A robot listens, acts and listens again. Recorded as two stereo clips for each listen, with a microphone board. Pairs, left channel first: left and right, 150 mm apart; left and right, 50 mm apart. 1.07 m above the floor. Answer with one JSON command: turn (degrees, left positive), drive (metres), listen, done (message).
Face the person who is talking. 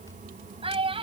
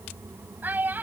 {"turn": -40}
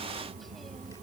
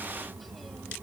{"listen": true}
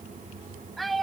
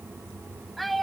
{"done": "Found it: a child speaking, straight ahead."}